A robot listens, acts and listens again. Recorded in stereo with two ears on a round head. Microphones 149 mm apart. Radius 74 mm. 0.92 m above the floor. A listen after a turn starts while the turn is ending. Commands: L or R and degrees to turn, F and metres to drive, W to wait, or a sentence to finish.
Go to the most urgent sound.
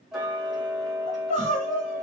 L35
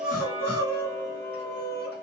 L105
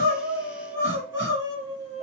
R15
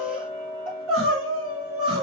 F1.0
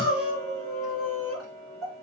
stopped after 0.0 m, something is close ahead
Something is in my way. I am facing the crying but have not reached it.